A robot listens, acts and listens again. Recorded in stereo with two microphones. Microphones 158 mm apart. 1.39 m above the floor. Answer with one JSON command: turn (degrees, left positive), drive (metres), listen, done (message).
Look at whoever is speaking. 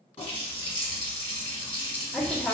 {"turn": 30}
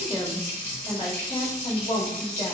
{"turn": 145}
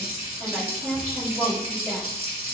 {"done": "Facing the woman speaking."}